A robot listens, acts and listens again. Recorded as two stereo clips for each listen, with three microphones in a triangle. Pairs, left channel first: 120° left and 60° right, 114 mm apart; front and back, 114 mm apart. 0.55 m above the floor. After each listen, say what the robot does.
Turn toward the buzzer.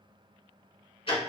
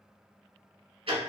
Keep listening.
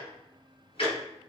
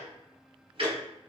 Keep listening.
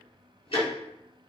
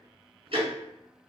I can't make out a buzzer to turn to.